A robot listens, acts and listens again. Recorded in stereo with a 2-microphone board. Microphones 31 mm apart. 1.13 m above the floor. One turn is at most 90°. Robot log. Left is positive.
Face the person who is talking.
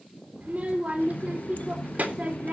note: The child speaking: about 55° right or 125° right.
cmd yaw -55
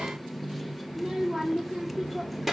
end: Facing the child speaking.